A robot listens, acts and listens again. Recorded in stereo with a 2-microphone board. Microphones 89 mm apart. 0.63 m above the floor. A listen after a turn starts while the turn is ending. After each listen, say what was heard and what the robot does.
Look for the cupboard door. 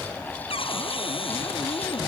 Turn 90° left.
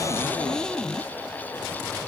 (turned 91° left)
Found it: a cupboard door, straight ahead.